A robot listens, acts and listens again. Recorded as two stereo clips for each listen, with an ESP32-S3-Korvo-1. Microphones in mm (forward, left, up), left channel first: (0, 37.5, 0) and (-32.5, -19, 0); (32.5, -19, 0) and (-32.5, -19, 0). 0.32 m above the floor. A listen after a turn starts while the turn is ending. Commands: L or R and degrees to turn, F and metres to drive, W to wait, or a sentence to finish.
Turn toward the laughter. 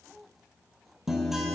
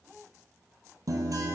W
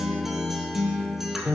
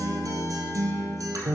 W
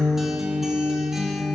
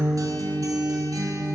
I can't make out laughter to turn to.